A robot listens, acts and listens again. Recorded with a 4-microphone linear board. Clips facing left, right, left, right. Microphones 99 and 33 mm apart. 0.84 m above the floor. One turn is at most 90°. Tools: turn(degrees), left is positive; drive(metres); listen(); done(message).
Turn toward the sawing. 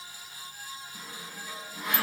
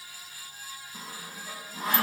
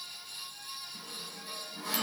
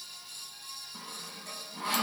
turn(degrees=-35)
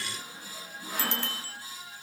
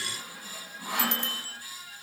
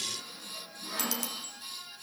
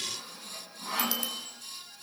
turn(degrees=-90)
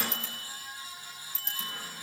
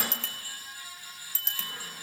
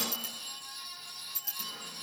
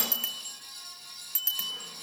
turn(degrees=-20)
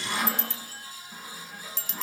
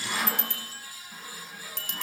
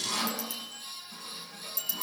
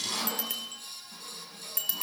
done("Found it: sawing, straight ahead, over 4 m away.")